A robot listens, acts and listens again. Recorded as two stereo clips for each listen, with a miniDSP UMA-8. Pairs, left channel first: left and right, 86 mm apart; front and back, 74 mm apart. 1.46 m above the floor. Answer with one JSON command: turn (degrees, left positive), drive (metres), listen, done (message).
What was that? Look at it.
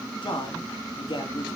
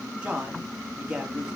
{"turn": 105}
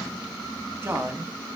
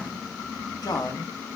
{"turn": -30}
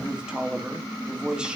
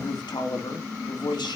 {"turn": -10}
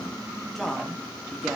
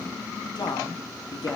{"done": "Facing the man speaking, 2 to 4 m away."}